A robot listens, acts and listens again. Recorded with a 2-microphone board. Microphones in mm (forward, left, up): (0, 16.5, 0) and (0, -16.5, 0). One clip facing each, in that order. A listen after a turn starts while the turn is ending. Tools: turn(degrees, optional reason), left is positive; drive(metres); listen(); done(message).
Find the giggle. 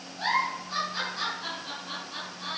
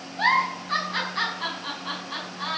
turn(degrees=-75, reason="The giggle: about 75° right or 105° right.")
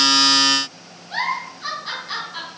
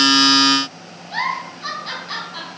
done("Facing the giggle, 2 to 4 m away.")